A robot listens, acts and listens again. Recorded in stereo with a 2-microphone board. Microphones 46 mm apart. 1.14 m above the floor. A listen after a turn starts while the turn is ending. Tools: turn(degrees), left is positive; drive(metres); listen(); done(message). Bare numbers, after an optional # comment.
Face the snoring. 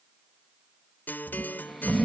turn(30)
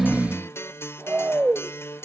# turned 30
# So it is at 30° right.
turn(-30)
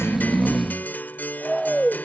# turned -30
done("Found it: snoring, straight ahead.")